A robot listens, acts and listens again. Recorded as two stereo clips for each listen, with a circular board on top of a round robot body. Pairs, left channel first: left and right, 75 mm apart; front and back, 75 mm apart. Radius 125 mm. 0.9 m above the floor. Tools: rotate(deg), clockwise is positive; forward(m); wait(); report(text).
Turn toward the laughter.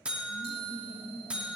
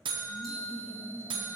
rotate(-75)
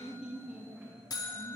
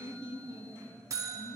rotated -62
rotate(20)
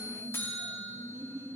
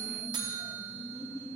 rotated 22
rotate(40)
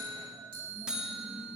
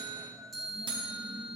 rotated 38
wait()
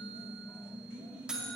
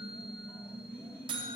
rotate(15)
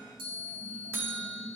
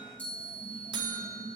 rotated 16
report("Found it: laughter, straight ahead, 2 to 4 m away.")